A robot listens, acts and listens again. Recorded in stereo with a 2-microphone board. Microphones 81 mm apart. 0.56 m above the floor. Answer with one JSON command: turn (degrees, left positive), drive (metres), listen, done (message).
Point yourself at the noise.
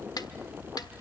{"turn": 60}
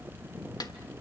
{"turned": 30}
{"turn": 75}
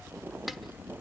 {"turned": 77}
{"listen": true}
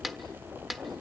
{"done": "Found it: a snare drum, straight ahead, 1 to 2 m away."}